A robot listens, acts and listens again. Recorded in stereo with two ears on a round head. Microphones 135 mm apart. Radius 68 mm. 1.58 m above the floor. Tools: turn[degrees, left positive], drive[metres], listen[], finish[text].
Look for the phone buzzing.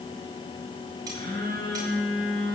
Thought: The phone buzzing: about 30° left or 150° left.
Action: turn[30]
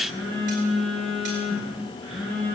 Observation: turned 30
Action: finish[Found it: a phone buzzing, straight ahead, over 4 m away.]